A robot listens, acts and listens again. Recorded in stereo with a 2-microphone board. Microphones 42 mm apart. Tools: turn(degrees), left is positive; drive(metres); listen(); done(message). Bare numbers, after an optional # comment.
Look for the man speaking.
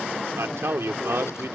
turn(-90)
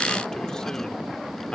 listen()
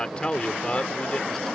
# The man speaking is now 25° left.
turn(25)
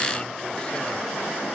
listen()
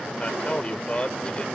# The man speaking is now 25° left.
turn(25)
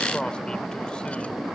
listen()
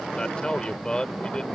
# The man speaking is now 20° left.
turn(20)
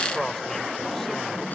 done("Found it: a man speaking, straight ahead.")